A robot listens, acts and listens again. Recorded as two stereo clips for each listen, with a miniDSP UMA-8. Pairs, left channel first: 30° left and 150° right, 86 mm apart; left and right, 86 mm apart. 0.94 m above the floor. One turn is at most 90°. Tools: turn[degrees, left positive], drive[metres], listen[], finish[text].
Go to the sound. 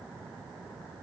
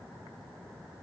Action: listen[]
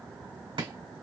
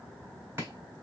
Thought: The chopping: 155° right.
Action: turn[-90]
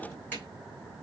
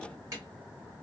Thought: The chopping is now 40° right.
Action: turn[-40]
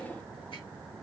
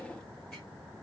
Action: listen[]
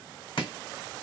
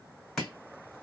Action: drive[1.0]
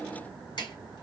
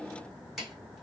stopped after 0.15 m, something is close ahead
Action: finish[Blocked. The chopping is further on, straight ahead.]